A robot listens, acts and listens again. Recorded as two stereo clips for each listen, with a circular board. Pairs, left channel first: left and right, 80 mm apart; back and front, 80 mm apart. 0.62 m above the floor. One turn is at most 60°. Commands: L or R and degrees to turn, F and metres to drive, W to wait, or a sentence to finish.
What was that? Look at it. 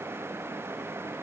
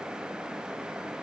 W
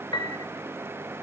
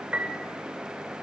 L60
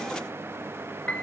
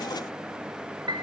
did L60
L15
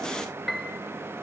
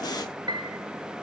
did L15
Facing the piano.